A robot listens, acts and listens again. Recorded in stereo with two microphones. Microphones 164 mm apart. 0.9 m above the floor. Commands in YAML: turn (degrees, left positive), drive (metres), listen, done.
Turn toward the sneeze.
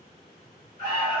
listen: true
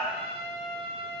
listen: true
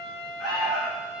done: "I can't make out a sneeze to turn to."